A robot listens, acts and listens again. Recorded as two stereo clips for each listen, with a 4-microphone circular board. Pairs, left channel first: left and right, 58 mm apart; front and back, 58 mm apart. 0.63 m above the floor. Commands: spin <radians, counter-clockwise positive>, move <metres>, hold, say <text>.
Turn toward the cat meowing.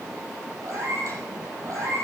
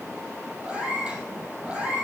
spin -1.92
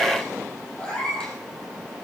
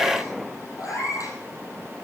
spin 0.26
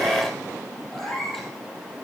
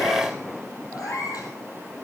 say Facing the cat meowing.